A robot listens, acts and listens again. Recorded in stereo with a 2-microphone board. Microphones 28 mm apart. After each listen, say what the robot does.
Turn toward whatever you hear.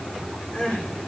Turn 50° left.
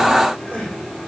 Turn 85° left.
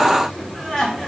Turn 20° left.
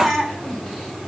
Found it: crying, straight ahead.